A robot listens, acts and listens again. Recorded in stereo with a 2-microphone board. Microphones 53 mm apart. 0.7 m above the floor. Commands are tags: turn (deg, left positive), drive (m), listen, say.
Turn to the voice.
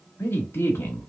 <turn deg="55"/>
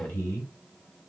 <turn deg="60"/>
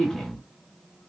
<turn deg="15"/>
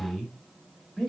<say>Found it: a man speaking, straight ahead, 1 to 2 m away.</say>